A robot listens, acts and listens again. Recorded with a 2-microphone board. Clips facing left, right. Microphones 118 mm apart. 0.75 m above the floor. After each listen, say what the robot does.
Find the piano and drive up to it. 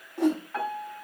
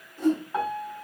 Turn 20° right.
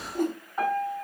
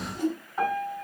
Drive 1.0 m forward.
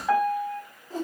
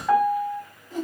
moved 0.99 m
Drive 1.0 m forward.
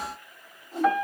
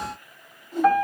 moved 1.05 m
Drive 1.0 m forward.
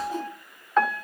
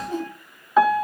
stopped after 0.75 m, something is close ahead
I am next to the piano.